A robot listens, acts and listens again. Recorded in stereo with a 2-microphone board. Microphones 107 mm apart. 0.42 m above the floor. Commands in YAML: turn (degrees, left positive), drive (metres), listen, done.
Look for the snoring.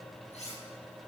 listen: true
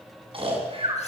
turn: -55
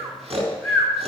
turn: -65
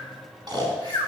turn: -40
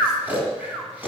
turn: -15
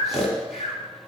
done: "Facing the snoring, over 4 m away."